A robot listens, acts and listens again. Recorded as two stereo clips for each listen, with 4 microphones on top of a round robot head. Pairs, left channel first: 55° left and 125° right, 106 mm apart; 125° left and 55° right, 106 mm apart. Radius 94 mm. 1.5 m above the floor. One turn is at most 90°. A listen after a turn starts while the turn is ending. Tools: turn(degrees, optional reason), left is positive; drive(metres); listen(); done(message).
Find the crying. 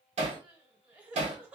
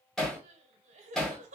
turn(degrees=-45, reason="The crying: 45° right.")
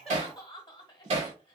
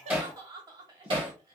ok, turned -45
done("Facing the crying, 1 to 2 m away.")